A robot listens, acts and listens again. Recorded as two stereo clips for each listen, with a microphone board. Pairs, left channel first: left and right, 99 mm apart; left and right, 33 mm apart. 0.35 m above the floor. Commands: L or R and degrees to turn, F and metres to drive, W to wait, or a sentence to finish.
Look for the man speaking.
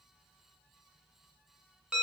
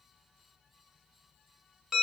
W
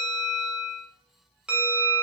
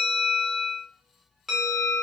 W
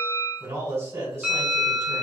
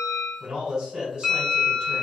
R25
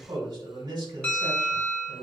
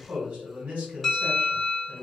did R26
R125
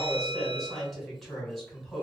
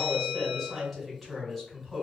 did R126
Facing the man speaking.